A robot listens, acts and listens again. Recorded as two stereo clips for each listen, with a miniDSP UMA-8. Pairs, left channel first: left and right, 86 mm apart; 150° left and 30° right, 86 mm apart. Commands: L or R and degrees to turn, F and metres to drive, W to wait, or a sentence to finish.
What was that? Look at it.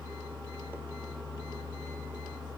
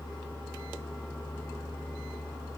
W
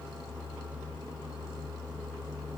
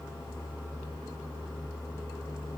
W
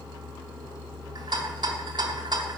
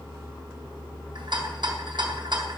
R60
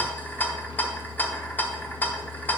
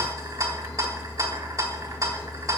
L20
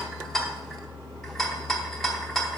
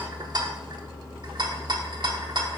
Found it: a rattle, straight ahead.